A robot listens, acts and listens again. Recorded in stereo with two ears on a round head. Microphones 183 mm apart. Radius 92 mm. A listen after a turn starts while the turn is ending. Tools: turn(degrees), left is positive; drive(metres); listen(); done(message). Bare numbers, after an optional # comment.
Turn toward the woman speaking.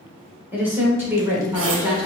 # The woman speaking: about 15° right or 165° right.
turn(-15)
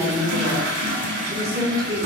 # The woman speaking: about 20° right or 160° right.
turn(-20)
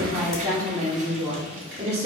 # The woman speaking: about 30° right or 150° right.
turn(-30)
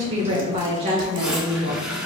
# The woman speaking: about 35° right or 145° right.
turn(-35)
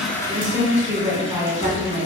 # So it is at 10° right.
turn(-10)
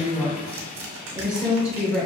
done("Facing the woman speaking.")